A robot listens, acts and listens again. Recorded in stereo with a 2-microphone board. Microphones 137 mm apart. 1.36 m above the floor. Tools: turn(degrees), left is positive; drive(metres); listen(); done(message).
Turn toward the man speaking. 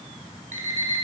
listen()
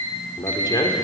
turn(degrees=30)
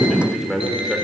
done("Found it: a man speaking, straight ahead.")